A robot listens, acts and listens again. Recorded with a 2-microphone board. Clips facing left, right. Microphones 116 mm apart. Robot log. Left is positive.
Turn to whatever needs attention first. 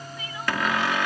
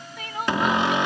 note: The crying: about 60° right or 120° right.
cmd yaw -60
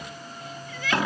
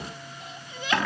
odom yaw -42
note: So it is at 20° right.
cmd yaw -20
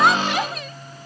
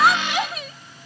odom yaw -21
end: Found it: crying, straight ahead.